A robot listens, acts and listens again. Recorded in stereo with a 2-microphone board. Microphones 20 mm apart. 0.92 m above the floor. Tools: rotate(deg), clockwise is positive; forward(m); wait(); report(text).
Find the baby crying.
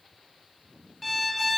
wait()
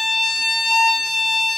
wait()
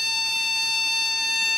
report("I can't make out a baby crying, only a violin.")